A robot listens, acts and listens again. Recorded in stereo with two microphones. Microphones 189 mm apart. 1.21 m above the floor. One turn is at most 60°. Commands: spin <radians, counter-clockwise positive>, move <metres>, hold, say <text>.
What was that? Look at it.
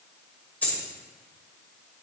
spin 0.52
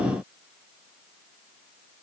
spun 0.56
hold
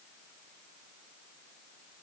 say I heard a dropped coin, but can't make it out now. It was about 25° right or 140° left.